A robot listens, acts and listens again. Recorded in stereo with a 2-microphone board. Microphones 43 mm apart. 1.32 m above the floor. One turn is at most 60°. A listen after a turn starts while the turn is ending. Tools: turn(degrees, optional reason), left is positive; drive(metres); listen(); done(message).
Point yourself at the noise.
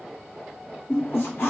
turn(degrees=60)
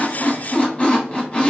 turn(degrees=30, reason="So it is at 30° left.")
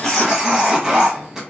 turn(degrees=-10, reason="The squeak is now 10° right.")
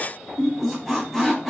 done("Facing the squeak.")